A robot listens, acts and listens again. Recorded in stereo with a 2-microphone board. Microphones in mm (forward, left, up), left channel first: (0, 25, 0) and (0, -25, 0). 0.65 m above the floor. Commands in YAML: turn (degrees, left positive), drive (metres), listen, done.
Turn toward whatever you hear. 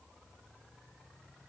listen: true
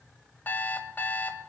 turn: 35
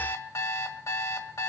turn: 110
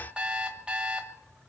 turn: -20
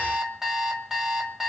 done: "Facing the alarm clock, 1 to 2 m away."